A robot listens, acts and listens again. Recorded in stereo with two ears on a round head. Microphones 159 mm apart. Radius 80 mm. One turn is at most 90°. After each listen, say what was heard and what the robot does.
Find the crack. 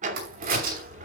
The crack: about 50° right or 130° right. Turn 50° right.
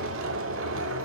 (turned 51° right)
Keep listening.
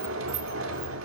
I heard a crack, but can't make it out now. It was about straight ahead or 80° right.